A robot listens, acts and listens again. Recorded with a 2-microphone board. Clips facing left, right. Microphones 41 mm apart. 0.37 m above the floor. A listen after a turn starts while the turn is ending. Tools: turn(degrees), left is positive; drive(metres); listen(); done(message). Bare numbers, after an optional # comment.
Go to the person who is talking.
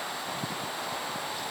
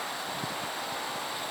listen()
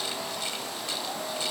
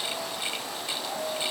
listen()
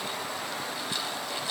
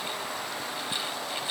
done("I can't make out anyone speaking to turn to.")